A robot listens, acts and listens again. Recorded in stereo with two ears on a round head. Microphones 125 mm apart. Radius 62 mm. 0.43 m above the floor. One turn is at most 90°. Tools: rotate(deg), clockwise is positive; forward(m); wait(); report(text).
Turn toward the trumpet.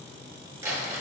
wait()
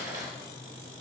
wait()
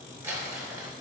report("I can't make out a trumpet to turn to.")